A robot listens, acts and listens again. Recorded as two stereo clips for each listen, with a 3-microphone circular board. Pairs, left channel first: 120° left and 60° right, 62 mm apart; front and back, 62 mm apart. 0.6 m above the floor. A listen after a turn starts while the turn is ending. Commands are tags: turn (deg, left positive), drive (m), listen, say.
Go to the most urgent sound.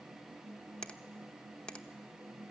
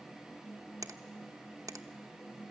<listen/>
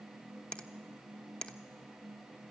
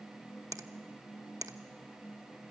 <listen/>
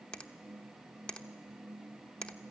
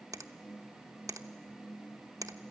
<say>I can't make out anything urgent, only a finger snap.</say>